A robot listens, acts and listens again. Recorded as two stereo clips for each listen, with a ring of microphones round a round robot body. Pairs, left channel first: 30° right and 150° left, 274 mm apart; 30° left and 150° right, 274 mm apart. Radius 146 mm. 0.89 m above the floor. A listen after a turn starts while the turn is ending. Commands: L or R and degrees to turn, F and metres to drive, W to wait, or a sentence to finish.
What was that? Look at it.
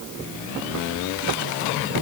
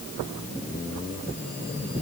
W
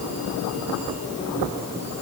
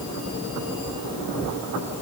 W
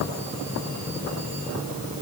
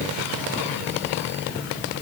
I can't make out anything to turn to.